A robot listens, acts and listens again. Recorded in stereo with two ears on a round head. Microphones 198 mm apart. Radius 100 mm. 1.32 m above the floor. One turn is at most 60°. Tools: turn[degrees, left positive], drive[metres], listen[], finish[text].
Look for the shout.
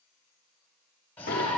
Action: turn[30]
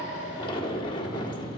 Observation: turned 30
Thought: So it is at 140° left.
Action: turn[60]
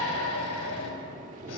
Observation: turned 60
Thought: The shout is now 75° left.
Action: turn[60]
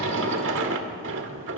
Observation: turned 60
Thought: Nothing new. It was at 15° left.
Action: turn[15]
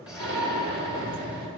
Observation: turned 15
Thought: The shout is now 15° left.
Action: turn[15]
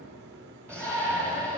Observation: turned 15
Action: finish[Found it: a shout, straight ahead.]